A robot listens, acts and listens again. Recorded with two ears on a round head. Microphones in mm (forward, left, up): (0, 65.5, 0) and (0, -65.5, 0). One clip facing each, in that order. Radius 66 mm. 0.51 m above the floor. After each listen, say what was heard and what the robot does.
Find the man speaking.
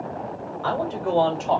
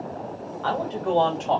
Turn 30° left.
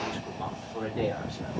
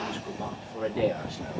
So it is at 30° right. Turn 30° right.
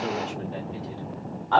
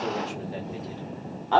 The man speaking is now 20° right. Turn 20° right.
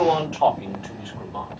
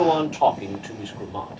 The man speaking is now 20° right. Turn 20° right.
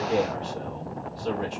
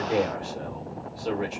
The man speaking is now 10° right. Turn 10° right.
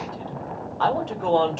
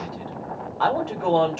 Facing the man speaking, 1 to 2 m away.